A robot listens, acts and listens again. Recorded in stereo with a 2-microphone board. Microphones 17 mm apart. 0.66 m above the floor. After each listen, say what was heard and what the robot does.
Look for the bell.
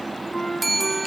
Turn 30° right.
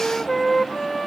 Keep listening.
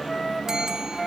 Keep listening.
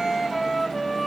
I heard a bell, but can't make it out now. It was about 25° left or 145° right.